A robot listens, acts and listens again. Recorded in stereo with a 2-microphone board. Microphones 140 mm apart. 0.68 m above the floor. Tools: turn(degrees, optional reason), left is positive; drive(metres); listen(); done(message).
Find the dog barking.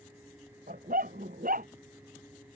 turn(degrees=-90)
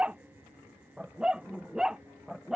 done("Found it: a dog barking, straight ahead.")